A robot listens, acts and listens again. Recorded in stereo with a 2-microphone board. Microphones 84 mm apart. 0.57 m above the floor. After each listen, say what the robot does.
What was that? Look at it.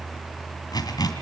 Turn 50° left.
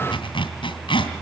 Turn 80° left.
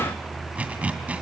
Turn 15° right.
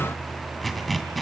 Facing the zipper, 2 to 4 m away.